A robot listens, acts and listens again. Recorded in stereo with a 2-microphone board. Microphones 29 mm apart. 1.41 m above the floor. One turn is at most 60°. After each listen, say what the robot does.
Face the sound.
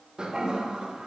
Turn 25° right.
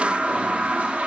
Turn 60° right.
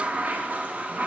Turn 60° right.
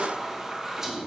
Turn 15° right.
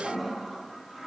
Found it: a toilet flushing, straight ahead, under 1 m away.